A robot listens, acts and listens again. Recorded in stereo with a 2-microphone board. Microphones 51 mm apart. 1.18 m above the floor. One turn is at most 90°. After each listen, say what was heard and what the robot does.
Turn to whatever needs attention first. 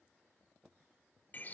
Keep listening.
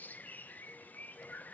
Keep listening.
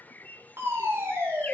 The fire alarm: about 55° right or 125° right. Turn 55° right.
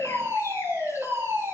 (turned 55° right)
So it is at 65° right. Turn 65° right.
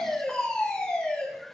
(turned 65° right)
The fire alarm is now 15° left. Turn 15° left.
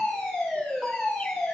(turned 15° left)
Facing the fire alarm.